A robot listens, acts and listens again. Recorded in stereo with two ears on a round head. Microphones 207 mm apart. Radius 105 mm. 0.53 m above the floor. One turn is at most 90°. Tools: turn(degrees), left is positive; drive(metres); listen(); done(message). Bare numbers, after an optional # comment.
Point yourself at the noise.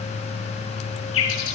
# The bird: about 70° left or 110° left.
turn(70)
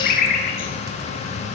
# So it is at 35° left.
turn(35)
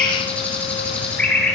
done("Found it: a bird, straight ahead.")